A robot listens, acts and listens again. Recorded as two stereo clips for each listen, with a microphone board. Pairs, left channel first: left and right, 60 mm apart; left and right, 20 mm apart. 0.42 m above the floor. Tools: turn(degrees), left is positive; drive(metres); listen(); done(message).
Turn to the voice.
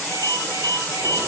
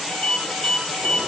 listen()
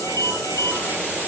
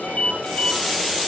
listen()
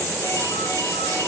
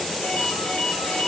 done("I can't make out anyone speaking, only a ringtone.")